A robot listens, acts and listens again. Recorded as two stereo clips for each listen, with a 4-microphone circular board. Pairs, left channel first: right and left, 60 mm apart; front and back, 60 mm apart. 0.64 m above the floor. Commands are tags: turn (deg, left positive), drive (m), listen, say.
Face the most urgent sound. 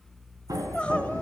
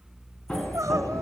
<turn deg="-160"/>
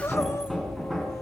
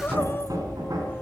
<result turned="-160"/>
<turn deg="-55"/>
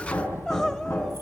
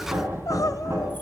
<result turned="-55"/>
<turn deg="-10"/>
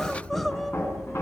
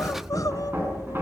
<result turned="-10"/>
<say>Facing the crying, 1 to 2 m away.</say>